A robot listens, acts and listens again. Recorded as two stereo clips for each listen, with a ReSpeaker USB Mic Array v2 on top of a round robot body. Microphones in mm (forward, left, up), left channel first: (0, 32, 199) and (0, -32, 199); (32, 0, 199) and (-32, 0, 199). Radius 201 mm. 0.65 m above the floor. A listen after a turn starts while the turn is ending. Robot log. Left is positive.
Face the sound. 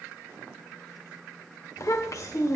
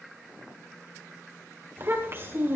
note: The child speaking: 125° left.
cmd yaw +125
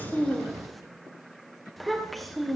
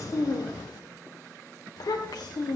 end: Found it: a child speaking, straight ahead, 2 to 4 m away.